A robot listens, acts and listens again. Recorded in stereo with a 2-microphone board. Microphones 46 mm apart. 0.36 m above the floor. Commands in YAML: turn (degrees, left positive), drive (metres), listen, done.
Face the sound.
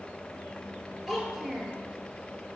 turn: -30
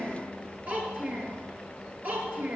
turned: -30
turn: -135
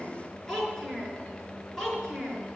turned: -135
turn: 15
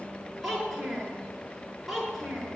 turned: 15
done: "Found it: a child speaking, straight ahead, over 4 m away."